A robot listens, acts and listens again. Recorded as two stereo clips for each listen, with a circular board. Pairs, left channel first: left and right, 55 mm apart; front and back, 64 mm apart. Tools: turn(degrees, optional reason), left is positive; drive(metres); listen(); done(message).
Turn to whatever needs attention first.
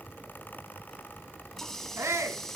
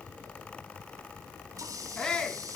turn(degrees=-75, reason="The shout: 75° right.")
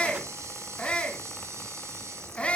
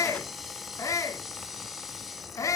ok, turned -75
turn(degrees=25, reason="The shout is now 25° left.")
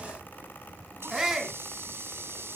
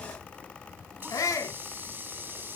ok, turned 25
turn(degrees=-10, reason="The shout is now 10° right.")
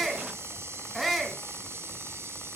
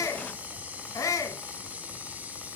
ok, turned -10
done("Found it: a shout, straight ahead, 2 to 4 m away.")